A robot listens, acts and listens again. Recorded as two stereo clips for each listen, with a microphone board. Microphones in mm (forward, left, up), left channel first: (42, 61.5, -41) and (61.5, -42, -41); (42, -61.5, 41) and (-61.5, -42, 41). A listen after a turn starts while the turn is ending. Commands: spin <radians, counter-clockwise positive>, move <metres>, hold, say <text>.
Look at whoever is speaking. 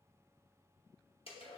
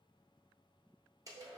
hold
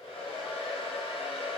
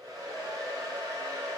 hold
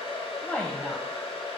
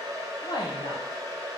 spin 0.35
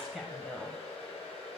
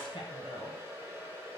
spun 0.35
spin 0.17
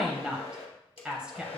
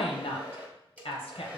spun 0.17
say Facing the woman speaking, under 1 m away.